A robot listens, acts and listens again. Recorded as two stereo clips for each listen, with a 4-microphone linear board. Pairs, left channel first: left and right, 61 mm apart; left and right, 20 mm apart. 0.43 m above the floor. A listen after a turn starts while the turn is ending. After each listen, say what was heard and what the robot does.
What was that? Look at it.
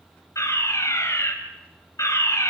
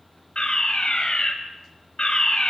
The fire alarm: about 60° left or 120° left. Turn 60° left.
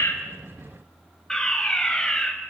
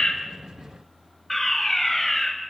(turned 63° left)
So it is at 10° left. Turn 10° left.
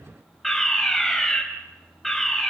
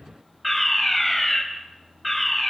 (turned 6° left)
Found it: a fire alarm, straight ahead, 2 to 4 m away.